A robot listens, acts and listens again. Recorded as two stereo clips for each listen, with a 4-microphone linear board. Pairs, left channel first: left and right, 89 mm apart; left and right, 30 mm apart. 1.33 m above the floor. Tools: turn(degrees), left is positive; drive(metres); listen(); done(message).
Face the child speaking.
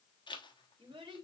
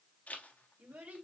turn(degrees=-70)
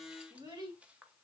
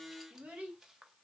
turn(degrees=-50)
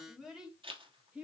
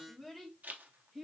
turn(degrees=-10)
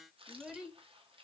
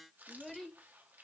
turn(degrees=-10)
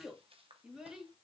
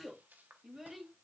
turn(degrees=-10)
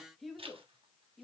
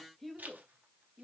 done("Facing the child speaking.")